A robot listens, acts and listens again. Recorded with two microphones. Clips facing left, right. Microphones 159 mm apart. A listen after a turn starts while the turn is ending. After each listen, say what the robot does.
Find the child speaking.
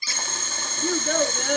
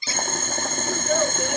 Turn 90° left.
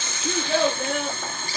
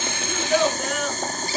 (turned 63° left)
Turn 35° left.
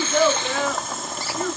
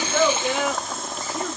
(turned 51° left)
Turn 15° right.
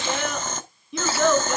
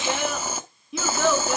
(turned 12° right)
Found it: a child speaking, straight ahead.